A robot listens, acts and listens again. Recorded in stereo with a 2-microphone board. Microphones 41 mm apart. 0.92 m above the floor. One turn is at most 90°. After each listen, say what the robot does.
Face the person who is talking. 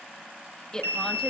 Turn 15° left.
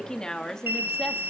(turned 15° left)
Turn 30° left.
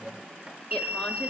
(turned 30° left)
Keep listening.
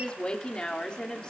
Turn 20° left.
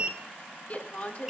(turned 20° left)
Turn 90° left.
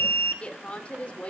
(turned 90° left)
Turn 30° left.
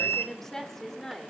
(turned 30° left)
Turn 10° left.
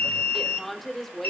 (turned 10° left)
Found it: a woman speaking, straight ahead, 2 to 4 m away.